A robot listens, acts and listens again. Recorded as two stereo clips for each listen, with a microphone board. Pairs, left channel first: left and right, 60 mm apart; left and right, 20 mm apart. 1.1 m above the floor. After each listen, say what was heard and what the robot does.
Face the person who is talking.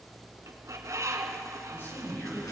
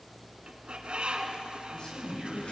The man speaking: about 35° left or 145° left. Turn 35° left.
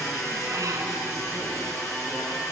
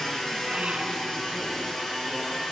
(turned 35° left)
Keep listening.
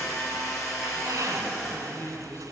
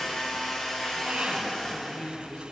So it is at 130° left. Turn 130° left.
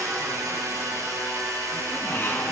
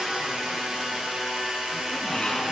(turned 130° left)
Keep listening.
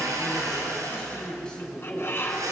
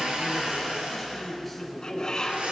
The man speaking is now 10° left. Turn 10° left.
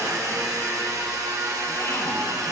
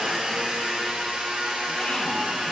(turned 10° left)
Keep listening.
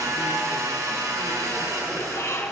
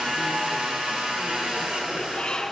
Keep listening.
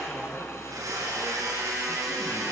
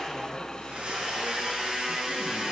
Facing where the man speaking came from. I can't hear it now.